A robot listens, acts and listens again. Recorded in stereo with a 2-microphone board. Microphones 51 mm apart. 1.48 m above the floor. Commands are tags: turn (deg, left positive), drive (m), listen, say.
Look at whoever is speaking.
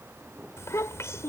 <turn deg="70"/>
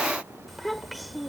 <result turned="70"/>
<say>Found it: a child speaking, straight ahead.</say>